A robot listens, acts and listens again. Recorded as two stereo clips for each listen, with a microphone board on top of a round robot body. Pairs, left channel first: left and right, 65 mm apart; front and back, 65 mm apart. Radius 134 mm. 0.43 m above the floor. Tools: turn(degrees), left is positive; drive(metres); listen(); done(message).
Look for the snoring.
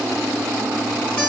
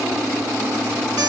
listen()
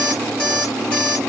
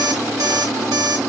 listen()
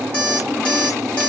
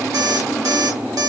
done("I can't make out snoring, only an alarm clock.")